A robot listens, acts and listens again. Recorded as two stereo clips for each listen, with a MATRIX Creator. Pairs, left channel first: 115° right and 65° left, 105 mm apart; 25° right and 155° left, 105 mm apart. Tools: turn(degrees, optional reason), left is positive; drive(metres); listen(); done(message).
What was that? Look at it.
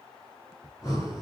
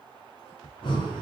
turn(degrees=-55, reason="The breathing: 55° right.")
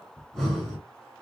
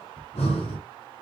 turn(degrees=-20, reason="The breathing is now 20° right.")
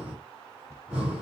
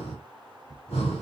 turn(degrees=-10, reason="The breathing is now 10° right.")
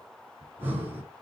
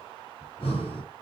done("Facing the breathing, 2 to 4 m away.")